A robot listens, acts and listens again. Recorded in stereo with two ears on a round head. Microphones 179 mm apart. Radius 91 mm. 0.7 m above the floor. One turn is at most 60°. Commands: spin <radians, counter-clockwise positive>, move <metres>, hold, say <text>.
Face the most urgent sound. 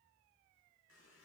hold
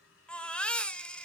spin 0.52
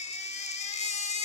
spin 1.05
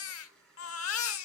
spin 1.05
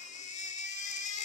spin 0.61
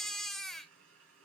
say Found it: a baby crying, straight ahead, 1 to 2 m away.